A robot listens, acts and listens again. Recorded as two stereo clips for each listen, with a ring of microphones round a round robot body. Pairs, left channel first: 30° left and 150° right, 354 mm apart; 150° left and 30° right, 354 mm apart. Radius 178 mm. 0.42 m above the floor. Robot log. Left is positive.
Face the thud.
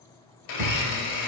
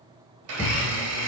note: The thud: 135° right.
cmd yaw -135
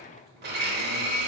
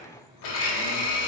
end: I heard a thud from this way, but can't make it out now.